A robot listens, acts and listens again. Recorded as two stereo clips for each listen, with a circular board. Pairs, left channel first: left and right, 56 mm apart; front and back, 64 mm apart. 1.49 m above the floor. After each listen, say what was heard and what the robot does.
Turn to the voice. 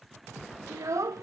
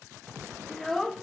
The child speaking: 85° right. Turn 85° right.
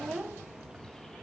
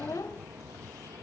The child speaking is now 20° right. Turn 20° right.
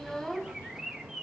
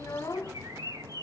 Facing the child speaking.